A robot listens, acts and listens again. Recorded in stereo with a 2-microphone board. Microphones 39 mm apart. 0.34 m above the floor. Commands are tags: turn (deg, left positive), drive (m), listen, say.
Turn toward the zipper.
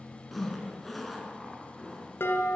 <turn deg="30"/>
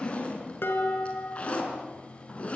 <turn deg="145"/>
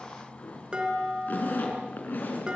<turn deg="55"/>
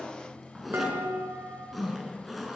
<say>Facing the zipper, over 4 m away.</say>